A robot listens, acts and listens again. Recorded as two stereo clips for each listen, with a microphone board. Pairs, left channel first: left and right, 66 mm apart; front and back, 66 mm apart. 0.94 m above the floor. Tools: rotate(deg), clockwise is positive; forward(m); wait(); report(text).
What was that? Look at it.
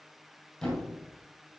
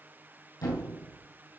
rotate(-10)
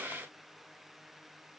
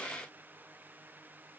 report("I heard a thud from this way, but can't make it out now.")